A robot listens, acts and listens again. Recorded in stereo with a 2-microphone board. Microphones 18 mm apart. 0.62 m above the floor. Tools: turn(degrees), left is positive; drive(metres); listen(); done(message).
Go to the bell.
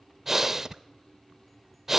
listen()
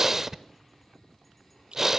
listen()
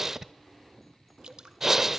done("I can't make out a bell to turn to.")